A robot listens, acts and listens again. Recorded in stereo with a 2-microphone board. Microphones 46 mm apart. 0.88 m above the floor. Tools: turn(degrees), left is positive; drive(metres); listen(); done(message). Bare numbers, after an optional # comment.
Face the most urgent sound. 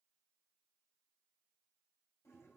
listen()
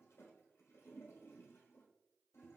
listen()
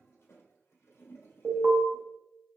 # The alarm: about 65° right or 115° right.
turn(-65)
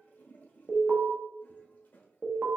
# So it is at 50° right.
turn(-50)
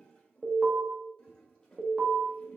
# The alarm is now 30° right.
turn(-30)
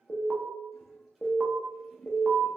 # The alarm is now 10° right.
turn(-10)
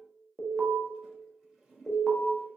done("Found it: an alarm, straight ahead, 1 to 2 m away.")